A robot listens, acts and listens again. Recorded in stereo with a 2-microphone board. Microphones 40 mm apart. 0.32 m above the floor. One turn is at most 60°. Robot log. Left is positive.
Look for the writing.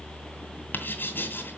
note: The writing: about 60° left or 120° left.
cmd yaw +60
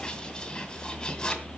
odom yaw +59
note: So it is at 20° left.
cmd yaw +20
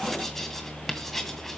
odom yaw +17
end: Found it: writing, straight ahead.